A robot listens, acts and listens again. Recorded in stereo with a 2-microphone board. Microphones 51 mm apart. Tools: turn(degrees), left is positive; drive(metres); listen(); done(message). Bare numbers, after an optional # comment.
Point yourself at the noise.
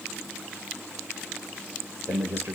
# The man speaking: about 55° right or 125° right.
turn(-55)
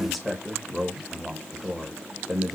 done("Facing the man speaking, 1 to 2 m away.")